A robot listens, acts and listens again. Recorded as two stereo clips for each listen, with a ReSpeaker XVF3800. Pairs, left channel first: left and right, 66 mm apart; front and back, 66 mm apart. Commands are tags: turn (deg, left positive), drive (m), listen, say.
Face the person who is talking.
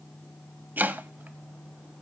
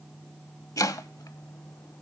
<listen/>
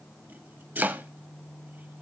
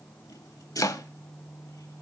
<listen/>
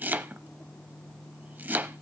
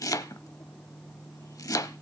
<say>I can't make out anyone speaking to turn to.</say>